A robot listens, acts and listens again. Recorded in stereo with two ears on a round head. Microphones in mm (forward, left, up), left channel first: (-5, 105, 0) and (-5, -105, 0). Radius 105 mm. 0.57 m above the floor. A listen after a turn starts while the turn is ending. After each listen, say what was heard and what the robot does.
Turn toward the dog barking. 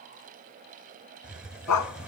Turn 90° left.
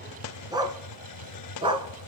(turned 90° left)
So it is at 25° right. Turn 25° right.
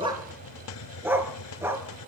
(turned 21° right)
The dog barking is now 10° right. Turn 10° right.
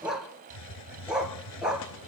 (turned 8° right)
Facing the dog barking, 2 to 4 m away.